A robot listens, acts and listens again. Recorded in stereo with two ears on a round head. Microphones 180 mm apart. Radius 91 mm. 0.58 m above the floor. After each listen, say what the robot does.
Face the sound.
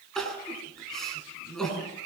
Turn 30° left.
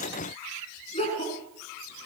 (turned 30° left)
Turn 150° left.
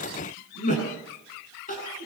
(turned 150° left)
Turn 40° left.
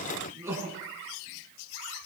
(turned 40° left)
Turn 15° right.
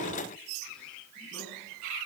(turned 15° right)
Keep listening.
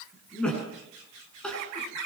Facing the crying.